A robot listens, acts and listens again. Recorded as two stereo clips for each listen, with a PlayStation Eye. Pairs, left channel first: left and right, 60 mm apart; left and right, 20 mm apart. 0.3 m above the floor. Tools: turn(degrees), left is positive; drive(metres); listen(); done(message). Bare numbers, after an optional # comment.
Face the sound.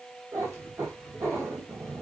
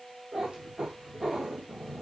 # The cat meowing: about 45° right or 135° right.
turn(-45)
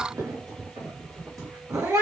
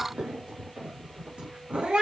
# So it is at 85° right.
turn(-85)
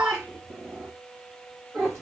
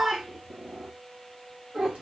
# The cat meowing is now 45° right.
turn(-45)
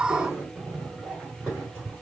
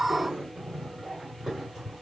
# The cat meowing is now 15° right.
turn(-15)
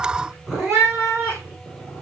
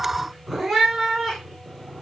done("Found it: a cat meowing, straight ahead, 2 to 4 m away.")